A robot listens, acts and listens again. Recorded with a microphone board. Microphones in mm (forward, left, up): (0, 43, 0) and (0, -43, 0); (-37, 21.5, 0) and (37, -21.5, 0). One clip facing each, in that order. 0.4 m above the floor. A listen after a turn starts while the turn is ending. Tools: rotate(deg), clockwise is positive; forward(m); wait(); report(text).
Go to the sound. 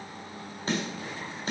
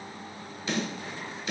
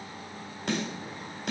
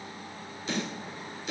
rotate(-140)
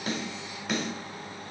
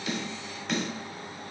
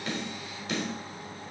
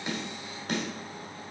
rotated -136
forward(1.0)
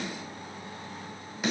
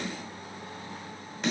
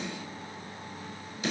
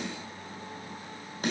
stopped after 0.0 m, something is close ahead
rotate(-10)
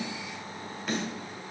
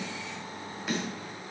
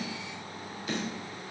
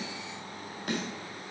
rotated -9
report("Something is in my way. I am facing the snare drum but have not reached it.")